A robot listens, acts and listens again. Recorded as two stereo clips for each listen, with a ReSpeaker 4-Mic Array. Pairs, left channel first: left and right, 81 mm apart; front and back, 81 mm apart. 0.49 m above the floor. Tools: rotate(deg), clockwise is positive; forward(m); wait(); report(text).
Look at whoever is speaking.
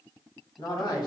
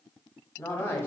rotate(-60)
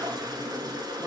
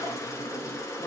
wait()
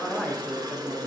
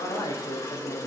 rotate(-15)
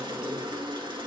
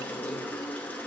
wait()
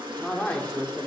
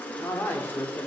rotate(-35)
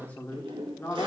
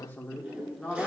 rotate(-70)
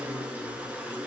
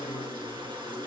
wait()
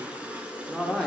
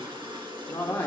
rotate(-10)
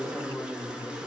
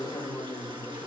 report("Found it: a man speaking, straight ahead, 1 to 2 m away.")